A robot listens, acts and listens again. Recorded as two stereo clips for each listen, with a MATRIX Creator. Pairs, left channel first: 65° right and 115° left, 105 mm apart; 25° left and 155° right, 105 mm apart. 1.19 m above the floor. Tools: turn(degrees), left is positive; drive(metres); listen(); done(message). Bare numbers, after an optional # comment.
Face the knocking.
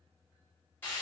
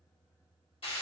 listen()
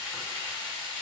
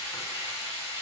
listen()
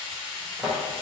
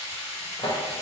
# The knocking: 40° left.
turn(40)
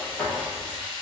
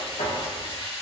# The knocking is now 15° left.
turn(15)
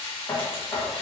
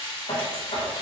done("Found it: knocking, straight ahead.")